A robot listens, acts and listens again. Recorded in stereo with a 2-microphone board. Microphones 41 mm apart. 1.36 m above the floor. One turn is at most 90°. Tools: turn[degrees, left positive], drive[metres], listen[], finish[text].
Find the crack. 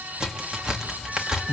Action: turn[-30]
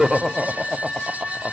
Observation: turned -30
Action: listen[]
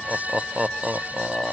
Action: finish[I heard a crack, but can't make it out now. It was about 15° left or 135° right.]